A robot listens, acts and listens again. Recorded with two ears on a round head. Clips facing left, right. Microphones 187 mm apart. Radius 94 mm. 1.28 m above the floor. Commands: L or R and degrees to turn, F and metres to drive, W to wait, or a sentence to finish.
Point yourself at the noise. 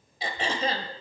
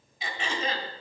L30
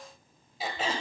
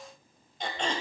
Found it: throat clearing, straight ahead.